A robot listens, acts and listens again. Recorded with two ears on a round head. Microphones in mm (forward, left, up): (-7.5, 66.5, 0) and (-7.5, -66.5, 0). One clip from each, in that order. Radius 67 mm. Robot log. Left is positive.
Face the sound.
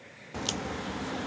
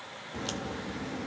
note: The crack: about 25° left or 155° left.
cmd yaw +25
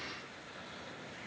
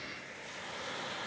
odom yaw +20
cmd idle
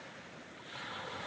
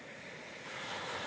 end: I heard a crack, but can't make it out now. It was about 5° left or 135° left.